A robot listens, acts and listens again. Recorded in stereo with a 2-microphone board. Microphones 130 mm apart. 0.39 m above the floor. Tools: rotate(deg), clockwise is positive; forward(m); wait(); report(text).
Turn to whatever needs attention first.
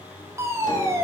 rotate(20)
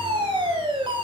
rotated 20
rotate(130)
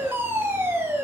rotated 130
rotate(20)
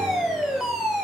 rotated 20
report("Facing the fire alarm.")